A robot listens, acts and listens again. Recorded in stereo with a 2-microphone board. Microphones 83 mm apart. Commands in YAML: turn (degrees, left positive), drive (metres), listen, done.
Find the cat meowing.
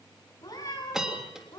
turn: 45
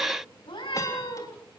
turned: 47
turn: 80
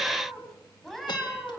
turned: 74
done: "Facing the cat meowing, over 4 m away."